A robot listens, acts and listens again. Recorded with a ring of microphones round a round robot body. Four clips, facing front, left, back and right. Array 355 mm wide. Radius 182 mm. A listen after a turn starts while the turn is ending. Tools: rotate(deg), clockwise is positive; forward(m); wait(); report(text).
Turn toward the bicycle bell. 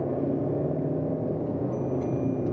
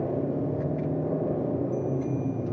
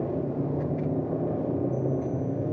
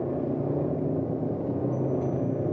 wait()
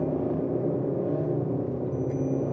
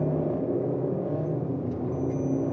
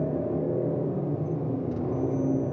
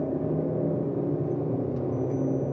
wait()
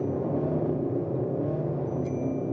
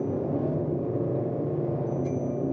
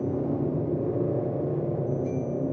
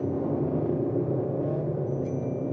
report("I can't make out a bicycle bell.")